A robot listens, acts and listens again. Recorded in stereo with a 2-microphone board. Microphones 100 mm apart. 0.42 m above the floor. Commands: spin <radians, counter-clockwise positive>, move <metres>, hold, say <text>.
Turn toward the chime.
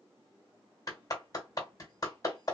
hold
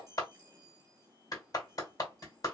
spin -0.61
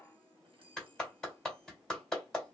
spin -1.83
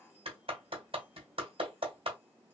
hold
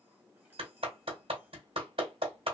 hold
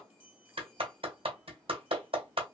spin -0.26
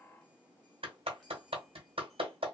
hold
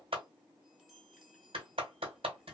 say Facing the chime, 1 to 2 m away.